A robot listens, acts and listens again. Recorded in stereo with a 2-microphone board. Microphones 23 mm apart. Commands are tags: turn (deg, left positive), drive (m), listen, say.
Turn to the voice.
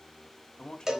<turn deg="40"/>
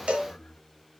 <turn deg="90"/>
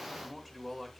<say>Found it: a man speaking, straight ahead.</say>